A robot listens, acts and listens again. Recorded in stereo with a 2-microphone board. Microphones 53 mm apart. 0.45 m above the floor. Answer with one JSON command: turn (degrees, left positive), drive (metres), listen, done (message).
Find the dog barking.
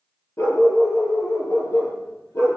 {"turn": 60}
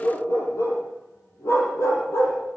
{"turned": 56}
{"turn": 65}
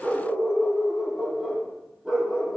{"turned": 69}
{"done": "Facing the dog barking, over 4 m away."}